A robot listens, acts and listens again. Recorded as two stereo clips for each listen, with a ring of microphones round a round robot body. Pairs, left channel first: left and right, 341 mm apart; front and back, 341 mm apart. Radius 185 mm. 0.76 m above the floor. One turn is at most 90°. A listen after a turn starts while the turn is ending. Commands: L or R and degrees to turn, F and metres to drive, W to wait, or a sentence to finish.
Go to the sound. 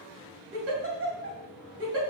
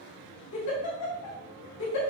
R40
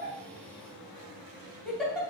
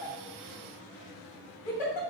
F1.0
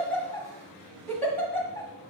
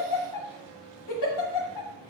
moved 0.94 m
F1.0
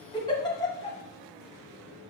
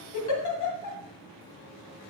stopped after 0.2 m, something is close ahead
L15
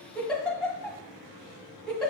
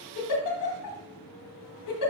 I am next to the giggle.